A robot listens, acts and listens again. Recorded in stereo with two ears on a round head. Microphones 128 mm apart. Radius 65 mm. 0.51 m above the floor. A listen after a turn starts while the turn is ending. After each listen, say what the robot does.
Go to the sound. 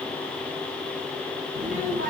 Turn 65° right.
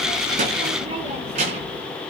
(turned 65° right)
Turn 50° right.
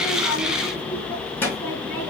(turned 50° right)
Turn 15° left.
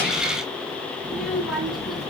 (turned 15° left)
Drive 1.0 m forward.
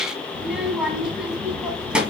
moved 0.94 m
Drive 1.0 m forward.
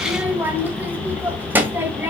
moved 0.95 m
Turn 15° right.
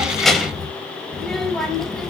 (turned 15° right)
Drive 1.0 m forward.
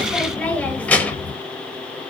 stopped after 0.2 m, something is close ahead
Turn 10° left.
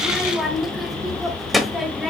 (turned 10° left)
Arrived at the child speaking, straight ahead.